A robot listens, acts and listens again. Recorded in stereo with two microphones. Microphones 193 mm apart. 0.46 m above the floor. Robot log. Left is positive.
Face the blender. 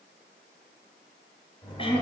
cmd idle
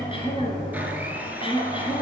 cmd yaw -30
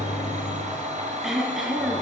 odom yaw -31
note: So it is at 140° right.
cmd yaw -140
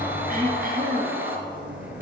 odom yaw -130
note: The blender is now 10° right.
cmd yaw -10
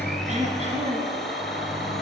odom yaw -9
end: Facing the blender, 1 to 2 m away.